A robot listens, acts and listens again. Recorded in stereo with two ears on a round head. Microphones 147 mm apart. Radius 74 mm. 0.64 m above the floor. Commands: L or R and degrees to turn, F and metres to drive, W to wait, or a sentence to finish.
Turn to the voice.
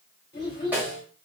L25
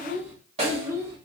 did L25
R20
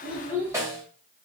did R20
R10
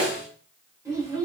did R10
R25
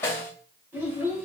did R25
R15
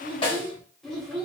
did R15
Facing the child speaking, 1 to 2 m away.